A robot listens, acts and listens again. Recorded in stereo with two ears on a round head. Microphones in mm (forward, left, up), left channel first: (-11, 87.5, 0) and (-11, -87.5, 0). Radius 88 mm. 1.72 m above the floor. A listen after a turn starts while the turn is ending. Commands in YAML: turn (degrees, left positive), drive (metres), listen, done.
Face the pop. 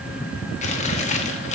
listen: true
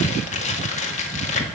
listen: true
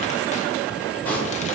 turn: 30
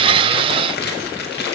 listen: true
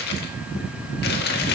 done: "I heard a pop, but can't make it out now. It was about 20° right or 140° left."